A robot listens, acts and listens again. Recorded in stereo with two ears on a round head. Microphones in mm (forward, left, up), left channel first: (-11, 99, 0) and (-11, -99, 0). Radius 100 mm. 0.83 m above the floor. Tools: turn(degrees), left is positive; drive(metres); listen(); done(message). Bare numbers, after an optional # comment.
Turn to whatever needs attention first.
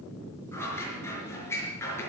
listen()
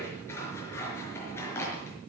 listen()
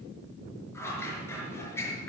done("I can't make out anything urgent, only scissors.")